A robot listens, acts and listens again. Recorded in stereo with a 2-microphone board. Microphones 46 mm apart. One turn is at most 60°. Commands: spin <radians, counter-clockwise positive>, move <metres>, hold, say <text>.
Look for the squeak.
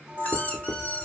spin 0.52
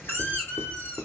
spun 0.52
spin 1.05
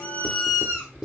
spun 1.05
spin 0.79
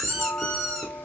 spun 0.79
spin 0.17
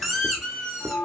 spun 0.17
say Found it: a squeak, straight ahead.